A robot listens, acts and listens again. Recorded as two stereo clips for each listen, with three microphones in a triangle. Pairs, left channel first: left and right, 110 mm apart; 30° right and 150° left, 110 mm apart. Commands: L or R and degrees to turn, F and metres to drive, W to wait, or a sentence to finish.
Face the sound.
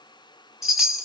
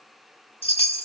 Found it: a chime, straight ahead, 2 to 4 m away.